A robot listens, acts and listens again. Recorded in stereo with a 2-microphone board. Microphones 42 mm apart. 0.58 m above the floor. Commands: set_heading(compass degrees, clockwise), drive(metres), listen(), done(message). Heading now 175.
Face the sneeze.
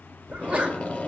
set_heading(200)
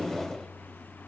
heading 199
listen()
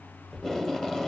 done("I heard a sneeze, but can't make it out now. It was about straight ahead or 135° right.")